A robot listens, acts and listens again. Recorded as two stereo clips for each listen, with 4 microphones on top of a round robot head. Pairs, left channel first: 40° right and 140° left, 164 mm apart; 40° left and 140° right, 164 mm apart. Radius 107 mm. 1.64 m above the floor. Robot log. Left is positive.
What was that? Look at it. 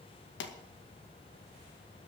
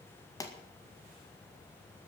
note: The pop: 30° right.
cmd yaw -30
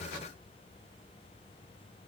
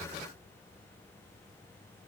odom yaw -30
end: I heard a pop from this way, but can't make it out now.